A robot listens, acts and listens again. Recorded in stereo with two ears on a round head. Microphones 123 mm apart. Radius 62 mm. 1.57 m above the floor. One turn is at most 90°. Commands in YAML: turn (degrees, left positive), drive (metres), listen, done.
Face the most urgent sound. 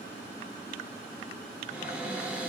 listen: true
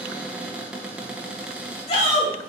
turn: 50
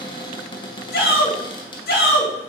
turn: 80
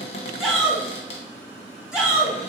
done: "Found it: a shout, straight ahead."